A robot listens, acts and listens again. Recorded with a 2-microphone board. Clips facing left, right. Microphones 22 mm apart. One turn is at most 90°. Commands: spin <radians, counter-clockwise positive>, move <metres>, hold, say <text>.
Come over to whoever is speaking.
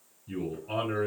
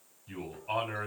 spin -0.96
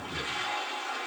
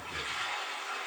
spin -0.79
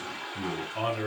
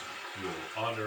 move 1.0
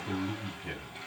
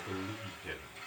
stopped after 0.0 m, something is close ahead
say Something is in my way. I am facing the man speaking but have not reached it.